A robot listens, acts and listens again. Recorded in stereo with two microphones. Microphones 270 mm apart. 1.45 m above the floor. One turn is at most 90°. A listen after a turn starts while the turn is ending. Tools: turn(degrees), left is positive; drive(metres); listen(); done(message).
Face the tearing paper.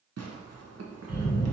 turn(degrees=-65)
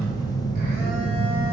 listen()
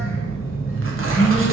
listen()
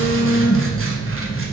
done("I heard tearing paper, but can't make it out now. It was about straight ahead or 50° right.")